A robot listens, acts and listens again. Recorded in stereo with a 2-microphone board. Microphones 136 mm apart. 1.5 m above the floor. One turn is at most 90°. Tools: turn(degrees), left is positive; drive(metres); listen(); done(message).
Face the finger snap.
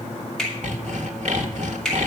turn(degrees=30)
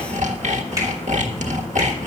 listen()
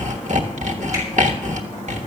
listen()
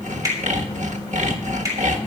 turn(degrees=-25)
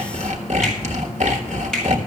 listen()
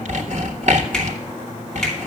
listen()
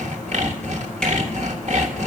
done("Facing where the finger snap came from. I can't hear it now.")